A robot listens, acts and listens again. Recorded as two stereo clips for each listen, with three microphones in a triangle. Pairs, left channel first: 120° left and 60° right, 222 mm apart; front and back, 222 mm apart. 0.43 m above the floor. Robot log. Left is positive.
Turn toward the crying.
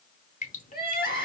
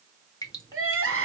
note: The crying: 165° left.
cmd yaw +165
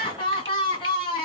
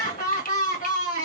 note: The crying is now 50° left.
cmd yaw +50
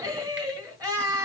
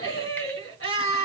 note: The crying is now 15° left.
cmd yaw +15
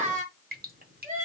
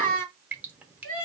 end: Found it: crying, straight ahead.